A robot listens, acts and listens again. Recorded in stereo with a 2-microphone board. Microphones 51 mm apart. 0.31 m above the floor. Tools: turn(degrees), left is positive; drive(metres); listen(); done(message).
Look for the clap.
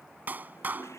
turn(degrees=-35)
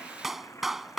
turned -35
done("Facing the clap.")